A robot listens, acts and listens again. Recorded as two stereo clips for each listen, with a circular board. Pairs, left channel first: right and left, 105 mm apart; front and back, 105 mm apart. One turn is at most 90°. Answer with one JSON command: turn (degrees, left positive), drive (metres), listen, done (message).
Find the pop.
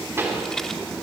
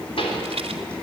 {"turn": 25}
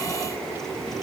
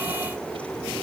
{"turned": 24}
{"done": "I heard a pop from this way, but can't make it out now."}